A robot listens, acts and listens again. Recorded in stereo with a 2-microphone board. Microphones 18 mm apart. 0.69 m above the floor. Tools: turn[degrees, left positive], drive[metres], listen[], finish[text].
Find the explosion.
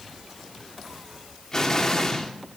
Thought: The explosion: about 35° left or 145° left.
Action: turn[35]
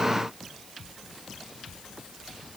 Action: listen[]
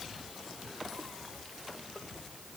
Action: finish[I heard an explosion, but can't make it out now. It was about straight ahead or 110° left.]